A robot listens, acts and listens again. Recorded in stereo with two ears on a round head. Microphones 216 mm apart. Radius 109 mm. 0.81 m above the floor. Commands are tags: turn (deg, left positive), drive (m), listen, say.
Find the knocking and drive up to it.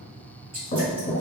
<turn deg="30"/>
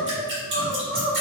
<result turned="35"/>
<listen/>
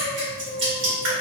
<listen/>
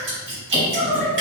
<say>I heard knocking, but can't make it out now. It was about 5° right or 115° left. I did not reach it.</say>